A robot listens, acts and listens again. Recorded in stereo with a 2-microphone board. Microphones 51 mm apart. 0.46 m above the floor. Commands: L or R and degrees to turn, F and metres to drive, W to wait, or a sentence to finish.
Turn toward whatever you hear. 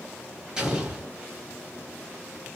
R30
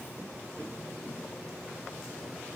W
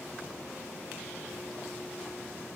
I heard an explosion, but can't make it out now. It was about 20° left or 140° right.